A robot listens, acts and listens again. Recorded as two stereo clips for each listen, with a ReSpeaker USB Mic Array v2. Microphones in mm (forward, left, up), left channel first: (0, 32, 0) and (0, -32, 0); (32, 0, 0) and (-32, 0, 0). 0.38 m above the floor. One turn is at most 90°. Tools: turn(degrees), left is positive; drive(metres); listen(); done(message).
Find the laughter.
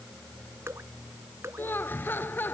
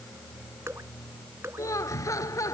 turn(degrees=35)
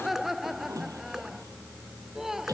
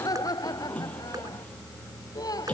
done("Found it: laughter, straight ahead.")